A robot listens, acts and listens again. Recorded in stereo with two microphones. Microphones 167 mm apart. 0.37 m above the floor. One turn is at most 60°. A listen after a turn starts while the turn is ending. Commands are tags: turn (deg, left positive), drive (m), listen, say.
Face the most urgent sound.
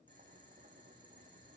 <listen/>
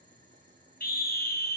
<turn deg="60"/>
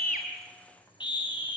<turn deg="30"/>
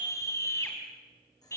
<turn deg="20"/>
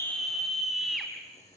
<say>Found it: a scream, straight ahead.</say>